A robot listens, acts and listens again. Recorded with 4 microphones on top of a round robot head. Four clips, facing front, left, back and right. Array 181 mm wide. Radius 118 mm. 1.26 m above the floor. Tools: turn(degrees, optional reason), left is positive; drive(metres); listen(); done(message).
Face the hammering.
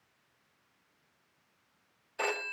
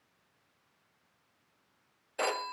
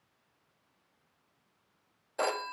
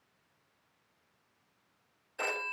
listen()
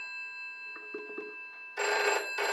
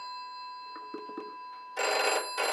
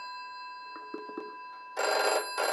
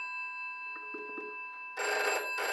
listen()
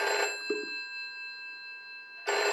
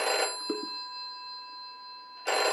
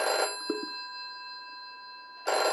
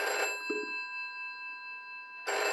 done("I can't make out hammering, only a phone ringing.")